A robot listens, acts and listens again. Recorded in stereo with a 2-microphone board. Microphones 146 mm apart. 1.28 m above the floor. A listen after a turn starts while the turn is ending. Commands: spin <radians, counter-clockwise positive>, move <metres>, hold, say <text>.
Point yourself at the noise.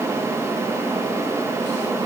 hold
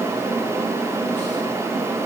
hold
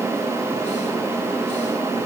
say I can't make out anything.